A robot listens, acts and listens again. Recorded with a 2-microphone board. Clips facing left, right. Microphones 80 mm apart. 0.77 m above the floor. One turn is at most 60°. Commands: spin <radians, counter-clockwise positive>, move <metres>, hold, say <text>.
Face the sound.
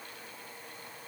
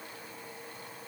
hold
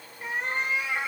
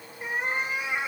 spin -0.26
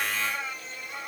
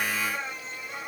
spin -1.05
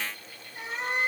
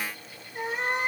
spin -1.05
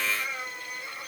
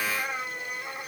spin -0.96
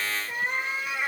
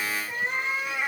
say Facing the cat meowing.